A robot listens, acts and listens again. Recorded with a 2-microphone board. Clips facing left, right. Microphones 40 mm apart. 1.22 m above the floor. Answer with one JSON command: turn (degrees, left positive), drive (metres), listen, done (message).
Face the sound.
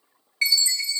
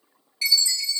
{"turn": 45}
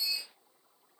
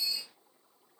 {"turn": 10}
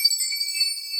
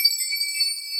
{"done": "Facing the chime."}